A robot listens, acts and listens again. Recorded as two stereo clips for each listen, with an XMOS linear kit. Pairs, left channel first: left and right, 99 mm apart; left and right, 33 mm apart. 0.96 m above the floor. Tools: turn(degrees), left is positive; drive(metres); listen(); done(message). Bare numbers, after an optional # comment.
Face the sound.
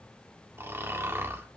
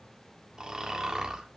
# The snoring: about 25° right or 155° right.
turn(-25)
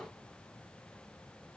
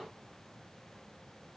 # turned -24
listen()
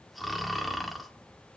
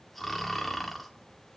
done("Found it: snoring, straight ahead, 1 to 2 m away.")